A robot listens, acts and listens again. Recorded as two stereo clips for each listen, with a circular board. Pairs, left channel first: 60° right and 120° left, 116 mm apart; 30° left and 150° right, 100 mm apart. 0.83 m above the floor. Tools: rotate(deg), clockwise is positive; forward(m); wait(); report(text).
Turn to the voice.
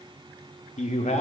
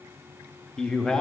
rotate(50)
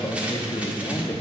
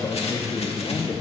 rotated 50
report("Found it: a man speaking, straight ahead, under 1 m away.")